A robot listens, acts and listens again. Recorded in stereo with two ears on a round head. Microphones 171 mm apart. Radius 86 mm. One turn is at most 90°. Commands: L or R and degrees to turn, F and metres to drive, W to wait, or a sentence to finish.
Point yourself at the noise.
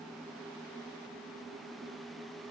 W
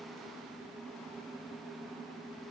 W
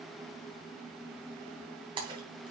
R25
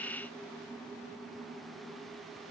W
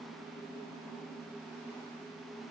I heard a splash, but can't make it out now. It was about straight ahead or 130° right.